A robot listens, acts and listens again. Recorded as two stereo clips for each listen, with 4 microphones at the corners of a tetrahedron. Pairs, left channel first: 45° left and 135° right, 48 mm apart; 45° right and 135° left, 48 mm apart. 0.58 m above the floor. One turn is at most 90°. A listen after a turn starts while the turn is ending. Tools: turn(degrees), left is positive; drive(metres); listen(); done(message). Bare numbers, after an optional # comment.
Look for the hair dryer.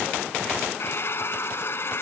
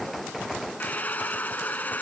# The hair dryer: 10° left.
turn(10)
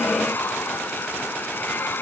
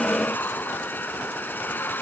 done("Facing the hair dryer.")